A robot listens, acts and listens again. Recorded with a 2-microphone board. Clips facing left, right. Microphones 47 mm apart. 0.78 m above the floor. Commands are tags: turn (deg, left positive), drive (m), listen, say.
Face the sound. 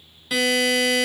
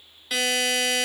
<turn deg="30"/>
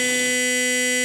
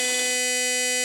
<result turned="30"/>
<turn deg="145"/>
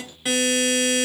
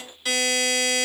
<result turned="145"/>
<turn deg="20"/>
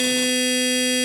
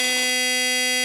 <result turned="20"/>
<say>Found it: a buzzer, straight ahead, under 1 m away.</say>